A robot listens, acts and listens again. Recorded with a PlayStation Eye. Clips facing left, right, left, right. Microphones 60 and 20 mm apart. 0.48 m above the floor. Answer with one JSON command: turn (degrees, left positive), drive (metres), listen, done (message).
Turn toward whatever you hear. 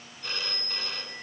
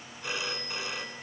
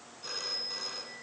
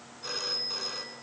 {"turn": -30}
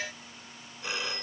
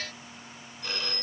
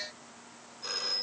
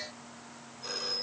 {"turn": 15}
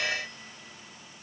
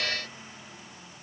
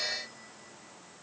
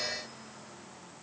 {"listen": true}
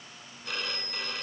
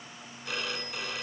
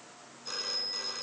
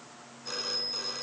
{"done": "Found it: a phone ringing, straight ahead, 2 to 4 m away."}